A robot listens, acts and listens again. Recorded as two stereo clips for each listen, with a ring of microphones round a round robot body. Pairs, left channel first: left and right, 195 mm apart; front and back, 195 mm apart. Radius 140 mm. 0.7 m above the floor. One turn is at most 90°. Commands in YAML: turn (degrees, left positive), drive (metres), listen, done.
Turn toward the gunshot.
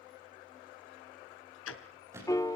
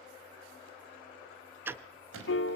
turn: -90
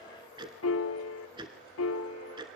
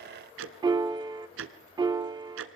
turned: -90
turn: -80
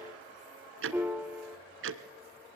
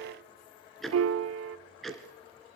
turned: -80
done: "Facing where the gunshot came from. I can't hear it now."